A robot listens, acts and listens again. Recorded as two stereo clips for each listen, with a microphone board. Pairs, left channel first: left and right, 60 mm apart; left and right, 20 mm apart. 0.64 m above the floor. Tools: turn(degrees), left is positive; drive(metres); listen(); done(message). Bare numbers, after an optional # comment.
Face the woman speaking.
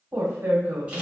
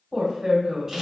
# The woman speaking: about 45° right or 135° right.
turn(-45)
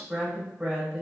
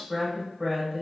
# So it is at 10° right.
turn(-10)
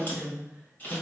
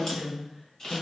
done("Found it: a woman speaking, straight ahead, 1 to 2 m away.")